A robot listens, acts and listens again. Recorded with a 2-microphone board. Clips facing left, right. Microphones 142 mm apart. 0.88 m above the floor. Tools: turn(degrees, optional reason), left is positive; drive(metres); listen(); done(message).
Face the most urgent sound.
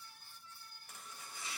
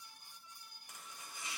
listen()
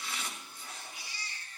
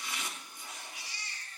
turn(degrees=-90)
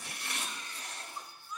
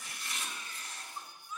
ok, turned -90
done("Facing the baby crying.")